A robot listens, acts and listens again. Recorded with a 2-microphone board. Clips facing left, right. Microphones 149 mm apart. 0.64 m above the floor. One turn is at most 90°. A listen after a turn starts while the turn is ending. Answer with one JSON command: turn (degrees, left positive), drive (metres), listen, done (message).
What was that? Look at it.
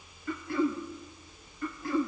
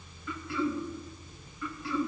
{"turn": 50}
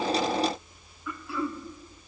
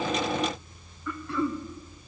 {"done": "Facing the throat clearing."}